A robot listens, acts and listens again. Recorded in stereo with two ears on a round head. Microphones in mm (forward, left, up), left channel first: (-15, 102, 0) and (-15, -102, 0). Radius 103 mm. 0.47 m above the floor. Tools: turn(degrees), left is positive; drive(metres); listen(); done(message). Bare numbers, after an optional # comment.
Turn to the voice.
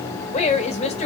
# The woman speaking: about 30° left or 150° left.
turn(30)
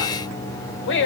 # So it is at 115° left.
turn(115)
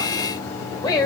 # The woman speaking is now 20° left.
turn(20)
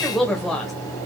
done("Facing the woman speaking, 1 to 2 m away.")